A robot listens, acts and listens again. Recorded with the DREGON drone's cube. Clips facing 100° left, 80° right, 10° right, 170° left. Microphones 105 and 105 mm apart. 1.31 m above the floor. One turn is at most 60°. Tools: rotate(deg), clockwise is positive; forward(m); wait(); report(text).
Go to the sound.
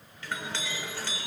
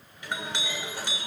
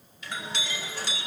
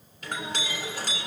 rotate(60)
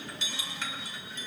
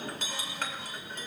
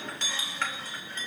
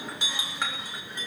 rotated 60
rotate(60)
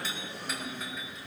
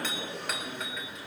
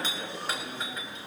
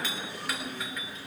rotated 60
rotate(60)
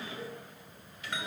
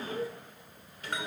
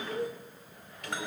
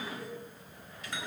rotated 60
rotate(35)
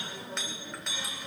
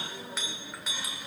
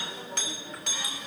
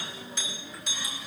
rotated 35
forward(1.0)
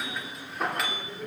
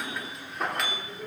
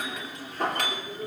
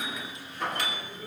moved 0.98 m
rotate(-10)
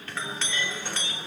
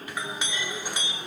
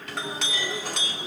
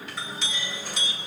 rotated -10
forward(1.0)
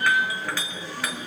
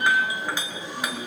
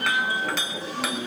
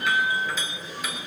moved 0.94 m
rotate(10)
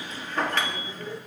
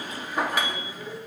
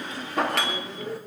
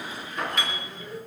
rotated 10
forward(1.0)
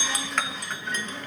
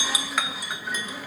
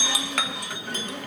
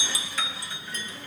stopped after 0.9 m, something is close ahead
report("I am next to the clink.")